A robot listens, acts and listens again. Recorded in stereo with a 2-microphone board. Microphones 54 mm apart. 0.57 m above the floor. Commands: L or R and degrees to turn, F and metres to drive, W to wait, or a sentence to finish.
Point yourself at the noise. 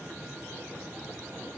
W
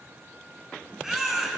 R30
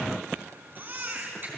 R140
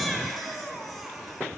Found it: a baby crying, straight ahead.